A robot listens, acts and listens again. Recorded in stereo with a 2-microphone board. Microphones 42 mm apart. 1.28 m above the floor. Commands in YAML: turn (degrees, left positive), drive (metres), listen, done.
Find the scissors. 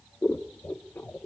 turn: 90
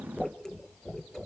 turn: 10
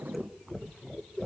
done: "Facing the scissors."